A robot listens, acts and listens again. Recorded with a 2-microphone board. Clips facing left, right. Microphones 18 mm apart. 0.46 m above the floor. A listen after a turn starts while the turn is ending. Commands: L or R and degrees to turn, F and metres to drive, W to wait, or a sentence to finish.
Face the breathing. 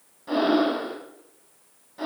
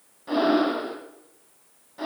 L30
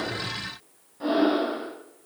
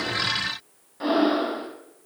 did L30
R25
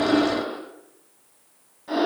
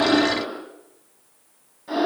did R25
Found it: breathing, straight ahead, 1 to 2 m away.